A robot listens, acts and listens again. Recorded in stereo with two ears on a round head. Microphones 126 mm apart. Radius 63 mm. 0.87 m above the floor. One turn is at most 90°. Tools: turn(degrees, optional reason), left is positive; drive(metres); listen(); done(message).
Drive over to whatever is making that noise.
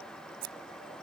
turn(degrees=-70, reason="The scissors: about 70° right or 110° right.")
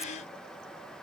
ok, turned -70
listen()
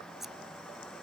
drive(metres=1.0)
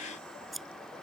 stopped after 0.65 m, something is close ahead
done("Blocked. The scissors is further on, straight ahead.")